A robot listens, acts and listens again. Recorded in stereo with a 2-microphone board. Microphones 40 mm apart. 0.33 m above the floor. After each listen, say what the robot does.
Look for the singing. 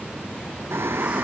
Turn 90° right.
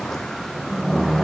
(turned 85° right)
Found it: singing, straight ahead.